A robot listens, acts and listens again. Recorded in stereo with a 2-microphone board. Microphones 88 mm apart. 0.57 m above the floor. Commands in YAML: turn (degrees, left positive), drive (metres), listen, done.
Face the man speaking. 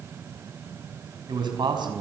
turn: -55
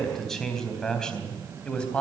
turn: 10
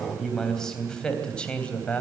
turn: 15
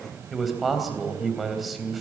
done: "Found it: a man speaking, straight ahead."